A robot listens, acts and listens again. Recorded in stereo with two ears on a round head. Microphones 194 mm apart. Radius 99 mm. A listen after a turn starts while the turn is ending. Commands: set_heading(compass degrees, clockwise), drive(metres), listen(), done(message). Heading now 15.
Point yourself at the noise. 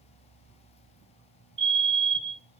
set_heading(70)
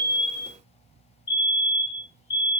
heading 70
set_heading(80)
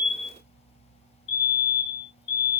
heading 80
done("Facing the fire alarm.")